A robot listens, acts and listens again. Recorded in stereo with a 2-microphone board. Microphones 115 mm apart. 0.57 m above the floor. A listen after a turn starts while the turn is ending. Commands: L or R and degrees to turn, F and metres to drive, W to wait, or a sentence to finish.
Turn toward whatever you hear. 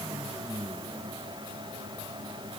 W
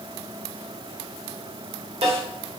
R60
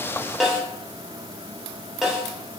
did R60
Found it: a snare drum, straight ahead.